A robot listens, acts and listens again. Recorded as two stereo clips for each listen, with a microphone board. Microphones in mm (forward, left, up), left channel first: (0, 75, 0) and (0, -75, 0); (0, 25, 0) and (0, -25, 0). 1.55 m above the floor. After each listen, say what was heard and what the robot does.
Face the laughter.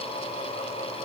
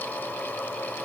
Keep listening.
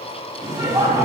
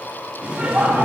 The laughter: about 25° right or 155° right. Turn 25° right.
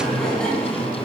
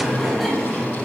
So it is at 10° left. Turn 10° left.
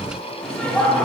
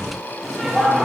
Found it: laughter, straight ahead, over 4 m away.